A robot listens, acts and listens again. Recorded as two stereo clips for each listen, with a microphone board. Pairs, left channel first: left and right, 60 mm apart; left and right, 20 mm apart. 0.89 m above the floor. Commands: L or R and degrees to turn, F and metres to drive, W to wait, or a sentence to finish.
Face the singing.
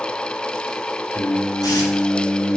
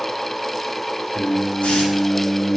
L45
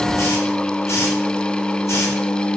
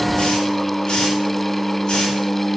L30
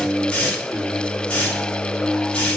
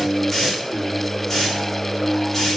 L15
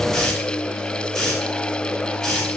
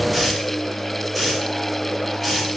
Found it: singing, straight ahead.